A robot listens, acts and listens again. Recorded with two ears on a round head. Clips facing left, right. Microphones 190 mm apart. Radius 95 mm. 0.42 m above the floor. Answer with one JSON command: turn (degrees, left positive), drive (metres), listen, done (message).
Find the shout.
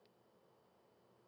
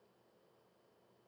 {"listen": true}
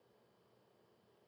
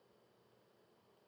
{"listen": true}
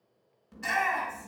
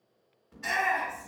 {"turn": 50}
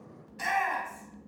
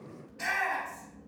{"turn": 75}
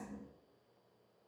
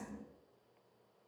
{"listen": true}
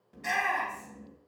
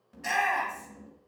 {"done": "Found it: a shout, straight ahead, 2 to 4 m away."}